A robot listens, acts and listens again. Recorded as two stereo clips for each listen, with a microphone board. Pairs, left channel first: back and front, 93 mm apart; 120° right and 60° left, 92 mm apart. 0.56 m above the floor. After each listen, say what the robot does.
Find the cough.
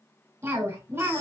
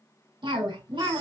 Turn 55° left.
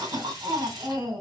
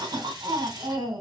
Turn 30° left.
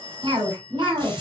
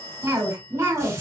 Facing the cough, 2 to 4 m away.